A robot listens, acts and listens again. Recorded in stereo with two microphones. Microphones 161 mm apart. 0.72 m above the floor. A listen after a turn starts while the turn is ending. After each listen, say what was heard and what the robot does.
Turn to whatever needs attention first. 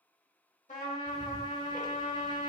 Keep listening.
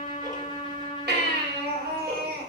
Turn 90° right.
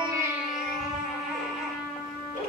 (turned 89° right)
Keep listening.
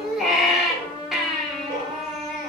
Found it: a baby crying, straight ahead.